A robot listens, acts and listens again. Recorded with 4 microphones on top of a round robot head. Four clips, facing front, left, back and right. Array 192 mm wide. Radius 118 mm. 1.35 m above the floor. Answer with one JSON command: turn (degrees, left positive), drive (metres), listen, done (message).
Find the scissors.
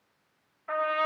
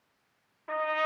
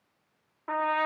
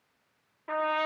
{"listen": true}
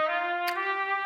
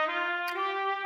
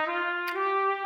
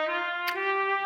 {"turn": -80}
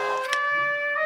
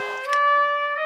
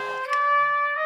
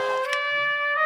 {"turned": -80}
{"listen": true}
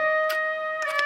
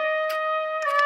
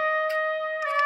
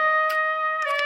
{"listen": true}
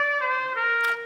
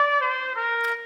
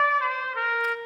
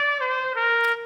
{"done": "Facing where the scissors came from. I can't hear it now."}